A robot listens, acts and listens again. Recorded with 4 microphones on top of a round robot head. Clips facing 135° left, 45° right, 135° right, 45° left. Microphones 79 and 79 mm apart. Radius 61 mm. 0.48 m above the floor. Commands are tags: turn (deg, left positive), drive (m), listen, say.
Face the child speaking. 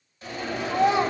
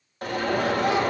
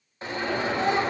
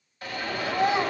<turn deg="120"/>
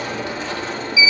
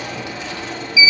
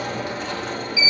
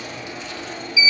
<listen/>
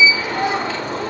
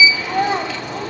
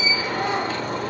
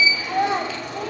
<turn deg="10"/>
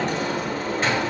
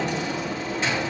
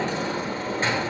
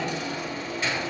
<listen/>
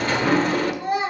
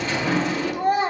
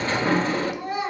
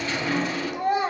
<say>Facing the child speaking, 2 to 4 m away.</say>